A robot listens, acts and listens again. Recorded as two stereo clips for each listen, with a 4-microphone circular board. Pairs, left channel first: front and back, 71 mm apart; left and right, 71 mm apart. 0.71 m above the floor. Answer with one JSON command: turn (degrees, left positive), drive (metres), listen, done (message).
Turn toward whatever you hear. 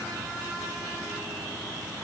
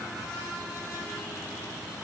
{"listen": true}
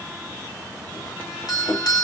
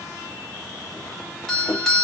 {"done": "Facing the doorbell."}